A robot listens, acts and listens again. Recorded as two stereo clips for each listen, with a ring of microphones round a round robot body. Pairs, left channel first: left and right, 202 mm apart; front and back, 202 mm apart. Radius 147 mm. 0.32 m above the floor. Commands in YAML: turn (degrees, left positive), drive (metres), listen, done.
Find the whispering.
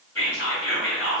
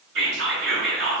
turn: 170
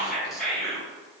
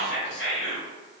done: "Found it: whispering, straight ahead."